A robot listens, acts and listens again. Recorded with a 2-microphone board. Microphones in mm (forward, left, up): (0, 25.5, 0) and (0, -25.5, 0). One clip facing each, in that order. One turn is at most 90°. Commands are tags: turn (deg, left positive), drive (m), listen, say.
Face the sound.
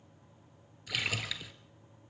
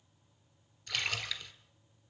<turn deg="30"/>
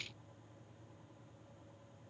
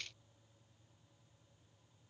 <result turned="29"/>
<listen/>
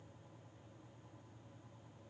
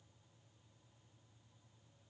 <say>I heard a splash, but can't make it out now. It was about 25° right or 145° left.</say>